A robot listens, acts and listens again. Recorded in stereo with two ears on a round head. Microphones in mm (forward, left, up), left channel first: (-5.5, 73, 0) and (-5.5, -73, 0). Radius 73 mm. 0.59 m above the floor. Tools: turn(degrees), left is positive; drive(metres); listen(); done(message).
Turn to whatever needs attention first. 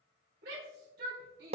turn(degrees=-65)
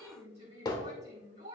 turn(degrees=-45)
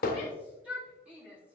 turn(degrees=-10)
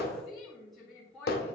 done("Found it: a shout, straight ahead, 2 to 4 m away.")